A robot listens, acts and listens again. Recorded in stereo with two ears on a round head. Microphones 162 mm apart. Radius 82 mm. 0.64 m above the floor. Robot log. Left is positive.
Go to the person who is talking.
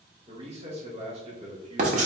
note: The man speaking: about 35° right or 145° right.
cmd yaw -35
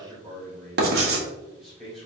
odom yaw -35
cmd fwd 1.0
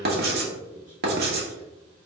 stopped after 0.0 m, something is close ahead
note: The man speaking is now 10° right.
cmd yaw -10
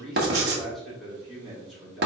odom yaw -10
end: Blocked. The man speaking is further on, straight ahead.